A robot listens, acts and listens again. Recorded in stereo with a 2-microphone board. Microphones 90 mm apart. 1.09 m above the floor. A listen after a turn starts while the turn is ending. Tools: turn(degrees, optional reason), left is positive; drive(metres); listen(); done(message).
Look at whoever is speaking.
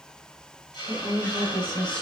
turn(degrees=30)
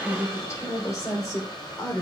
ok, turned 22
turn(degrees=140, reason="So it is at 140° left.")
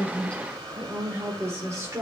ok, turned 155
turn(degrees=-35, reason="The woman speaking is now 35° right.")
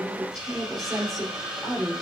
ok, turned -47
done("Facing the woman speaking, 2 to 4 m away.")